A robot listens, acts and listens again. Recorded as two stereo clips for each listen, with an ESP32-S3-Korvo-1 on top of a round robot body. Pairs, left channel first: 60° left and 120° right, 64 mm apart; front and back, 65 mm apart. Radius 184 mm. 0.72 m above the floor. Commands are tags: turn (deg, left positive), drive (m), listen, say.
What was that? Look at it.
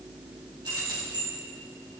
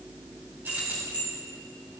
<turn deg="-115"/>
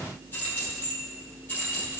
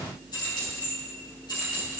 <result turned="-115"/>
<say>Facing the keys jangling, over 4 m away.</say>